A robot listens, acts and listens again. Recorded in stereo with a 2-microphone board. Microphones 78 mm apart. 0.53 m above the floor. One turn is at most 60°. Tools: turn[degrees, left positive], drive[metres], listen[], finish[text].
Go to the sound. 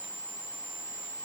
Action: listen[]
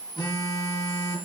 Action: turn[60]
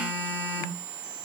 Thought: So it is at 25° left.
Action: turn[25]
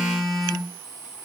Action: drive[1.0]
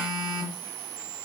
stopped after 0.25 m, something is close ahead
Thought: The phone buzzing is now 10° right.
Action: turn[-10]
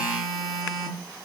Action: finish[Blocked. The phone buzzing is further on, straight ahead.]